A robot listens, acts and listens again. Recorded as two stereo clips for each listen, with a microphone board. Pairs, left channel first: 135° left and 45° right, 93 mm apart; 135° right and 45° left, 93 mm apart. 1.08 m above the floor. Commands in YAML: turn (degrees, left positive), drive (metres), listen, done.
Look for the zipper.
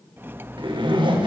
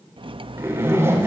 turn: -15
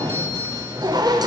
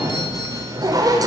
done: "Found it: a zipper, straight ahead."